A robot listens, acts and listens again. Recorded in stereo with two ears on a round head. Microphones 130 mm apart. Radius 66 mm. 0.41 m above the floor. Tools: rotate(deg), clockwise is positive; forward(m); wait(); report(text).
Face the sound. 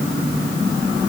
wait()
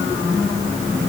wait()
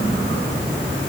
report("I can't make out anything.")